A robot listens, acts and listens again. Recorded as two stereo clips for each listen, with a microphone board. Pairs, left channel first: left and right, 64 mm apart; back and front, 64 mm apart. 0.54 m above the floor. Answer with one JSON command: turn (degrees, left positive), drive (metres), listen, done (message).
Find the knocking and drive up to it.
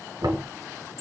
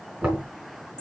{"turn": -80}
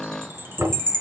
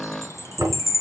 {"turn": -40}
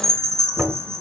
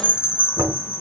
{"turn": -20}
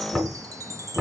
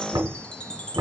{"drive": 1.0}
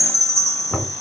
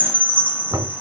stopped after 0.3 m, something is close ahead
{"done": "Something is in my way. I am facing the knocking but have not reached it."}